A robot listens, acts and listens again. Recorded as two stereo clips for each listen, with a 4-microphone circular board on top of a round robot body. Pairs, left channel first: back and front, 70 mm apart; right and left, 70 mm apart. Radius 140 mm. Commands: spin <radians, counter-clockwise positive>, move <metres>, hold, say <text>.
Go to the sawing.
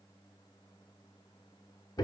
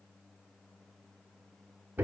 hold
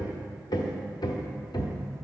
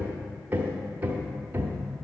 hold
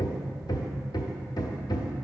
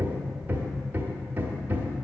say I can't make out sawing, only hammering.